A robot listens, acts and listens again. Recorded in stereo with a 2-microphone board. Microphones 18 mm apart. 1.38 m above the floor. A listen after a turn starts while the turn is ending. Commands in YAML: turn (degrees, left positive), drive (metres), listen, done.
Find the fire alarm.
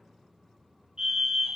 turn: -60
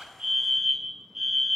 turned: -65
turn: -35
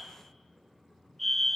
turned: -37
done: "Facing the fire alarm, 2 to 4 m away."